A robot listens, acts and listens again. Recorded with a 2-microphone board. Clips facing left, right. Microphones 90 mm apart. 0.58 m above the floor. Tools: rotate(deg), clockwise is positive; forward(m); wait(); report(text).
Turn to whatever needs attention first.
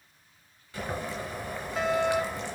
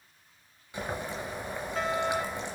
rotate(-30)
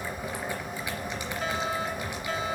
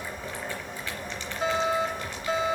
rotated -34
rotate(30)
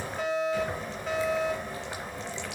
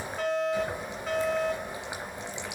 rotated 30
report("Found it: a fire alarm, straight ahead, 2 to 4 m away.")